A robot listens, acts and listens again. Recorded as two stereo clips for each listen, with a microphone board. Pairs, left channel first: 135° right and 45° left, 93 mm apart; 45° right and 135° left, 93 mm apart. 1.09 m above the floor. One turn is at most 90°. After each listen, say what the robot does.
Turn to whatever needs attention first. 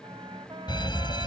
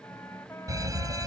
Turn 90° right.
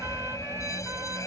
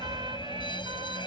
Turn 80° right.
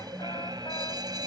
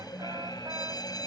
Facing the fire alarm.